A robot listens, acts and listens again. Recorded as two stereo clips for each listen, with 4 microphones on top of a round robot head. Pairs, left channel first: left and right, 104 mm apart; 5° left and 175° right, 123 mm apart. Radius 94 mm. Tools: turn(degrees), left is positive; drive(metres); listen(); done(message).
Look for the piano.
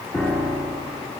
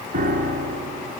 turn(degrees=175)
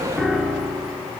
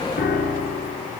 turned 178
done("Found it: a piano, straight ahead, 2 to 4 m away.")